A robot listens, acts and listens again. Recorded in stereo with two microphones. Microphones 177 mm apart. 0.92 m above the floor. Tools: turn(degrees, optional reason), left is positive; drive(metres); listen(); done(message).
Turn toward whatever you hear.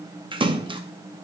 turn(degrees=-25, reason="The splash: about 25° right or 155° right.")
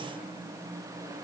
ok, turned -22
listen()
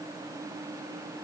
done("I heard a splash, but can't make it out now. It was about 5° right or 130° right.")